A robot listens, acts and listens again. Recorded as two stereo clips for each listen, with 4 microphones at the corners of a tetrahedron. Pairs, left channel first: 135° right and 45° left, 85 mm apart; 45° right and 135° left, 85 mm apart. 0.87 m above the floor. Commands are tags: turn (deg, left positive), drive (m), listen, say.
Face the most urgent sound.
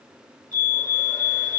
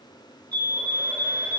<turn deg="160"/>
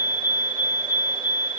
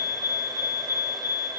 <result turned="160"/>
<say>Facing the fire alarm.</say>